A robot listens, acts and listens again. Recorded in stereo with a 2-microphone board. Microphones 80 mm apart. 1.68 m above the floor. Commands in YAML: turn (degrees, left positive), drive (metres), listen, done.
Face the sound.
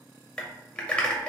turn: 30
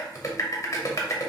turn: 135
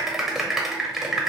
done: "Found it: typing on a keyboard, straight ahead."